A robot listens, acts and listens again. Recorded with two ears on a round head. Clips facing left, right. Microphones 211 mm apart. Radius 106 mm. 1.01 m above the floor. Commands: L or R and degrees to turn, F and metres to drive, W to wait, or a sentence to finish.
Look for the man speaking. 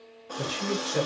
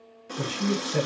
R45
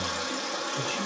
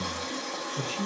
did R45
R15
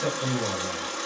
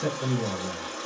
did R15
Found it: a man speaking, straight ahead, 1 to 2 m away.